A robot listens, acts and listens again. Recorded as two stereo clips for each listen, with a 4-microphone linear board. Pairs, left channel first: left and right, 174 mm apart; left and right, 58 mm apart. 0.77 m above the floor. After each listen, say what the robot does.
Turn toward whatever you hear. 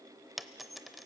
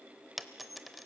Turn 30° left.
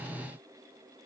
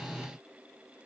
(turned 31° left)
Keep listening.
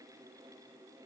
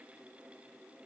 I heard a dropped coin, but can't make it out now. It was about 30° right or 150° left.